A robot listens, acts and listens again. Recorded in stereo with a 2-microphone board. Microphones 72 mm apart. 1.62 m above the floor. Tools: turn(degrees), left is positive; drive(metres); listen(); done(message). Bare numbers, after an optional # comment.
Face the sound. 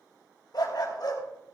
# The dog barking: about 65° left or 115° left.
turn(65)
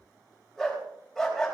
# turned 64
done("Facing the dog barking.")